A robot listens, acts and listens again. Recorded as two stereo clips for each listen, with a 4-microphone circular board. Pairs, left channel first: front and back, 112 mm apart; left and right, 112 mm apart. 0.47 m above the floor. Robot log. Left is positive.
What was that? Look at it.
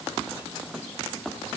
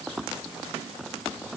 cmd idle
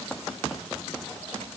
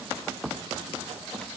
cmd idle
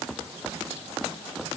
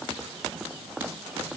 end: I can't make out anything.